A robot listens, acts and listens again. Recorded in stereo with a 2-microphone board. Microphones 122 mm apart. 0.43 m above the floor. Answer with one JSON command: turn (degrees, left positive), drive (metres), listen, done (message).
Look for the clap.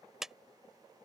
{"turn": -30}
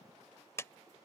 {"turn": 25}
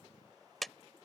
{"done": "Found it: a clap, straight ahead."}